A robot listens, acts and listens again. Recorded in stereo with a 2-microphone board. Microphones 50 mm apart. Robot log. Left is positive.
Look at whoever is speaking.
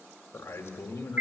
note: The man speaking: about 55° left or 125° left.
cmd yaw +55
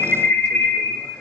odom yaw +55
cmd idle
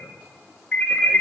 cmd idle
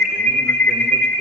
end: I heard a man speaking, but can't make it out now. It was about straight ahead or 70° left.